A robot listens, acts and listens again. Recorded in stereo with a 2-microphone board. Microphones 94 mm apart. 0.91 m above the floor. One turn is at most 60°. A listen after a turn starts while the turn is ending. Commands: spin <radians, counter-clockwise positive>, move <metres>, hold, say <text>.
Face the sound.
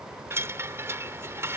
spin -0.44
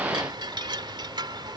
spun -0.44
spin -1.05
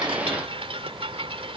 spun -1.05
spin -1.05
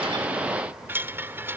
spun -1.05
spin -0.44
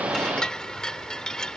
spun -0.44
say Found it: a chime, straight ahead.